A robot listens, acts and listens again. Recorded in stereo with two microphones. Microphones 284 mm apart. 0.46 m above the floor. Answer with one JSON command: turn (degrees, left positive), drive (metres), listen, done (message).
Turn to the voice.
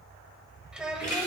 {"turn": -30}
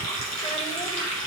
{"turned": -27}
{"listen": true}
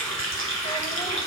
{"listen": true}
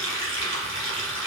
{"done": "I heard a child speaking, but can't make it out now. It was about 25° left or 150° right."}